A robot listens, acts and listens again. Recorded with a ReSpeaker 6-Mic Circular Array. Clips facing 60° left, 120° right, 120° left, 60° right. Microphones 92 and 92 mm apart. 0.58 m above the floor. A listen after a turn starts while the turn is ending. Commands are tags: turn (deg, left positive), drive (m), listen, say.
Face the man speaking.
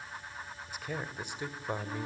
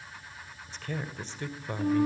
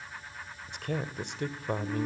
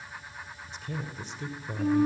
<turn deg="130"/>
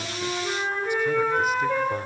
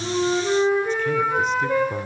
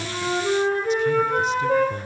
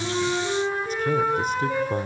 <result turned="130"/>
<listen/>
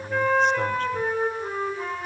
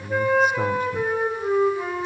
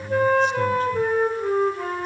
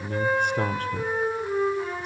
<turn deg="-30"/>
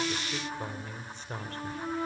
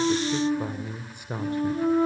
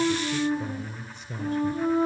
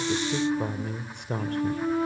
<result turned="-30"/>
<turn deg="-45"/>
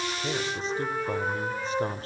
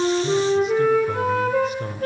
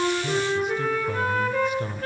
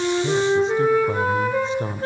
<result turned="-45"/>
<say>Facing the man speaking.</say>